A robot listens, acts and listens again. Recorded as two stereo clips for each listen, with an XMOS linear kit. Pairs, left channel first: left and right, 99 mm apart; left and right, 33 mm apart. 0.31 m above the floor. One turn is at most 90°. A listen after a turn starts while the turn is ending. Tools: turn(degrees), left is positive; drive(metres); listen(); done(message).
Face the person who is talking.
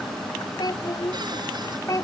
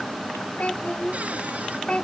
turn(degrees=35)
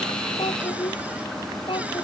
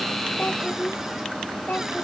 turn(degrees=90)
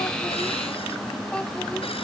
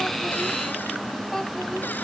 turn(degrees=30)
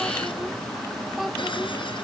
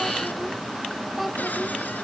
listen()
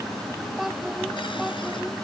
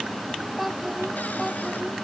done("Facing the child speaking.")